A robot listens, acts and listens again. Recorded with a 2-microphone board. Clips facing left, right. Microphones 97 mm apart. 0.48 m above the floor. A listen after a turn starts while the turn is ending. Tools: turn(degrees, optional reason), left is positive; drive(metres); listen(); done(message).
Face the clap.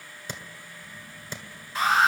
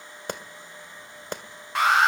turn(degrees=-55, reason="The clap: about 55° right or 125° right.")
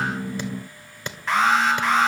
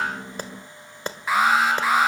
turn(degrees=-45, reason="So it is at 45° right.")
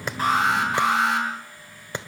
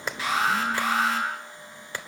turn(degrees=25, reason="The clap is now 25° left.")
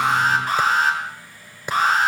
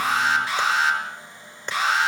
turn(degrees=10, reason="The clap is now 10° left.")
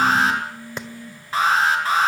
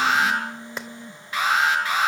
done("Found it: a clap, straight ahead.")